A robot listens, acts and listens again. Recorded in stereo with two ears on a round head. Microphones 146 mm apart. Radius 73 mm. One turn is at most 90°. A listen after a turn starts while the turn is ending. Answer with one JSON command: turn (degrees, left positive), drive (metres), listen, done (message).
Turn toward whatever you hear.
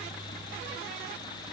{"listen": true}
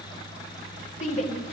{"turn": 45}
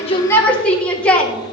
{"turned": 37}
{"turn": 10}
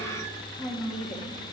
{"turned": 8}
{"listen": true}
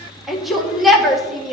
{"done": "Found it: a shout, straight ahead."}